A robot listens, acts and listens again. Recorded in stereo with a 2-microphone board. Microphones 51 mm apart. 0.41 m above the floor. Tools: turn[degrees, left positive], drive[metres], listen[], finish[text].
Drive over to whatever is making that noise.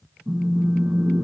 Thought: The phone buzzing: about 70° right or 110° right.
Action: turn[-70]
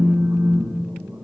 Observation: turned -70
Thought: So it is at 45° right.
Action: turn[-45]
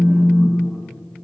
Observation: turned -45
Thought: The phone buzzing is now 10° right.
Action: turn[-10]
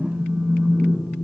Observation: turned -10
Action: drive[1.0]
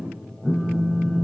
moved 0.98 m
Action: drive[1.0]
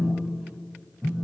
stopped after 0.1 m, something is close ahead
Thought: The phone buzzing is now 10° left.
Action: turn[10]
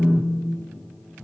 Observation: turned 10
Action: finish[I am next to the phone buzzing.]